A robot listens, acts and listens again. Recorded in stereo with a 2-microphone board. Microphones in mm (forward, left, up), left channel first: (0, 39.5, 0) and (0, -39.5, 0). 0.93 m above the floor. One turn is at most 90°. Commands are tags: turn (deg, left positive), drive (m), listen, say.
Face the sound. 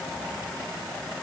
<listen/>
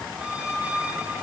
<turn deg="-15"/>
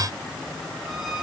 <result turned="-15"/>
<say>Found it: a squeak, straight ahead, over 4 m away.</say>